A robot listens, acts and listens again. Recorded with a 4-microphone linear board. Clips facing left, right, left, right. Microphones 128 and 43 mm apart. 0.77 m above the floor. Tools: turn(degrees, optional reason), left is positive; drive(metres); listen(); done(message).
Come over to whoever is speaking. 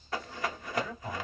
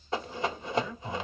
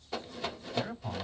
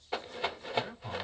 turn(degrees=50, reason="The man speaking: about 50° left or 130° left.")
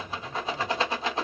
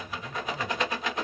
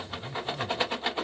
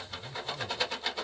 listen()
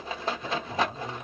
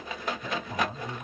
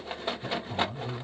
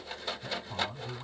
turn(degrees=10, reason="So it is at 10° left.")
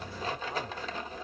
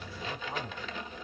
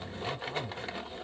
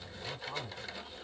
listen()
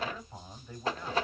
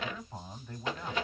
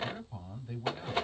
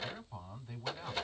drive(metres=1.0)
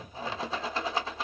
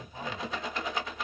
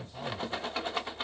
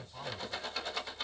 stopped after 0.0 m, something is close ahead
listen()
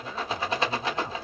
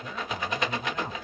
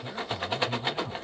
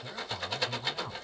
done("Something is in my way. I am facing the man speaking but have not reached it.")